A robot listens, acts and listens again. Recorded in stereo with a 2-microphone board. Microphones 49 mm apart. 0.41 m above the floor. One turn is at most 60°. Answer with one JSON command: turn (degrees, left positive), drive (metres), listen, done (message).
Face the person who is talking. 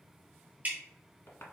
{"listen": true}
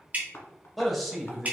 {"turn": -30}
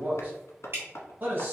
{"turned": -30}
{"turn": -60}
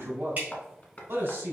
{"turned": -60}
{"turn": -60}
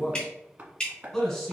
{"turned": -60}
{"done": "Found it: a man speaking, straight ahead."}